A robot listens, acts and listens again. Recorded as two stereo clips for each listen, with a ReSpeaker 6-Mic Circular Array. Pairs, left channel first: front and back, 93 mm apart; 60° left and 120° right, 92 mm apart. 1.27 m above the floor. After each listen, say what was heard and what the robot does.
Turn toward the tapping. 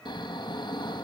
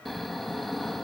Keep listening.
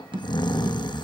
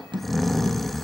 The tapping: 155° right. Turn 155° right.
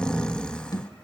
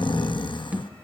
The tapping is now 45° right. Turn 45° right.
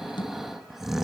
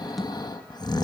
The tapping is now 30° right. Turn 30° right.
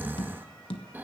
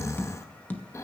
The tapping is now 10° right. Turn 10° right.
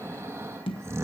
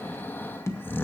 Facing the tapping.